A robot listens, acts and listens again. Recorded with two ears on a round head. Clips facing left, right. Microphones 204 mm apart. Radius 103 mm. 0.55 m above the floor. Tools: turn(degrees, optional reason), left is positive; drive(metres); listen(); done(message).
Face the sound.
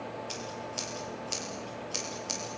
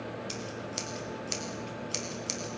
turn(degrees=-25, reason="The scissors: about 25° right or 155° right.")
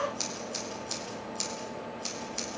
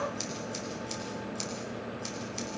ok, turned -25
done("Found it: scissors, straight ahead.")